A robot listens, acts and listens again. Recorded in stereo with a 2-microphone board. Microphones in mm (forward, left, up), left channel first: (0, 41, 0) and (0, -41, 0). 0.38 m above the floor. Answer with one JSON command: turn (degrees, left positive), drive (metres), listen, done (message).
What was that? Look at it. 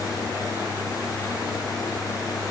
{"listen": true}
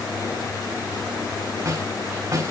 {"turn": -40}
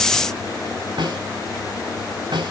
{"turn": -90}
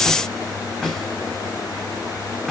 {"done": "Facing the snare drum."}